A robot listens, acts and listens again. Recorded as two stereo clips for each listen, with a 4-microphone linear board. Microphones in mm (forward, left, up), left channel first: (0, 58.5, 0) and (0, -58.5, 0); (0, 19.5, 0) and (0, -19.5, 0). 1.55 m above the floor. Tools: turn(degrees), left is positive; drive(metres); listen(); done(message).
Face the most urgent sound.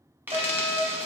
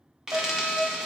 turn(degrees=-60)
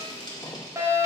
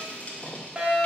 turn(degrees=-30)
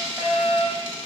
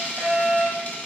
turn(degrees=-15)
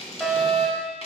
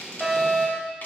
done("Facing the fire alarm, 1 to 2 m away.")